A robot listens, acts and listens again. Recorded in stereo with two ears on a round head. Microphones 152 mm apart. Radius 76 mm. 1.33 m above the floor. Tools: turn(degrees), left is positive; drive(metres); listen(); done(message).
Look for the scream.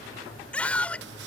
turn(degrees=30)
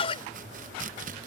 turn(degrees=145)
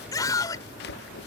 turn(degrees=20)
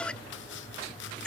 done("Facing the scream.")